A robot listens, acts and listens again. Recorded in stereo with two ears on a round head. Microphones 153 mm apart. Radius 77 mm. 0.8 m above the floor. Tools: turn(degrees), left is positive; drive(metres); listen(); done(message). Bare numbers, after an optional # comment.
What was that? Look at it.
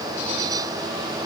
listen()
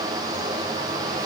listen()
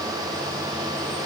done("I can't make out anything.")